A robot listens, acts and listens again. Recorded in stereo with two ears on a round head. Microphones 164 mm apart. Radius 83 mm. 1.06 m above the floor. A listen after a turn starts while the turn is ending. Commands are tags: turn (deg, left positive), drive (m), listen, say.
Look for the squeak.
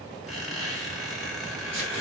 <turn deg="30"/>
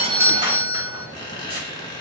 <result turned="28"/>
<turn deg="150"/>
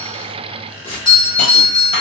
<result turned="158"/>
<turn deg="-10"/>
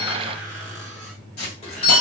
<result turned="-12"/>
<listen/>
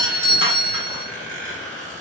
<say>Found it: a squeak, straight ahead, 1 to 2 m away.</say>